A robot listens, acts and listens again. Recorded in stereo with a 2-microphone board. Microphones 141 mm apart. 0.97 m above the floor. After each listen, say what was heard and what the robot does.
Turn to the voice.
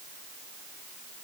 Keep listening.
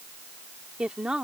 Turn 30° right.
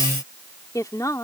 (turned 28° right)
So it is at 20° left. Turn 20° left.
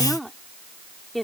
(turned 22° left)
Facing the woman speaking.